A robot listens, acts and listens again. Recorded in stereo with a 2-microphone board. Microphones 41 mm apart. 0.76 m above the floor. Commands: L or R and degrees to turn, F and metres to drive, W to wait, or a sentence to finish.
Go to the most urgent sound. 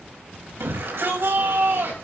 R70
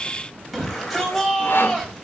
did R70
F1.0
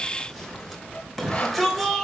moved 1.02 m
F1.0
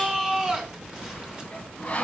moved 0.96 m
R15
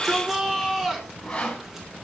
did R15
F1.0
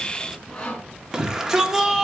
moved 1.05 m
R15
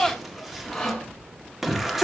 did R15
F1.0
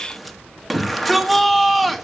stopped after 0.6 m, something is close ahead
I am next to the shout.